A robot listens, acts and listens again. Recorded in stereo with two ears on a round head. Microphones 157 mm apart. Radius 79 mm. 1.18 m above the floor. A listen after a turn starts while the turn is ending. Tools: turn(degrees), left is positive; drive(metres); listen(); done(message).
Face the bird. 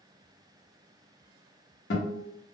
listen()
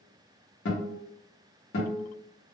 listen()
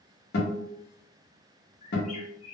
turn(degrees=45)
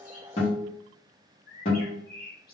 turn(degrees=80)
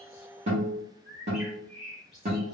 done("Found it: a bird, straight ahead.")